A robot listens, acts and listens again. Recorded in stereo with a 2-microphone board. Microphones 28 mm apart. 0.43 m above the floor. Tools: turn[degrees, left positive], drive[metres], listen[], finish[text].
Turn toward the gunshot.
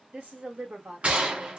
Thought: The gunshot: about 50° right or 130° right.
Action: turn[-50]
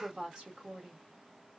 Action: listen[]
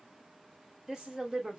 Action: finish[I heard a gunshot, but can't make it out now. It was about straight ahead or 80° right.]